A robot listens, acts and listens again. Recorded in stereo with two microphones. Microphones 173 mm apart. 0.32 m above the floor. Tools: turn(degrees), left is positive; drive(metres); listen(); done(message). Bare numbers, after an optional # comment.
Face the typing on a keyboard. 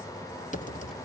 # The typing on a keyboard: about 45° left or 135° left.
turn(45)
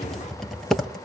done("Facing the typing on a keyboard.")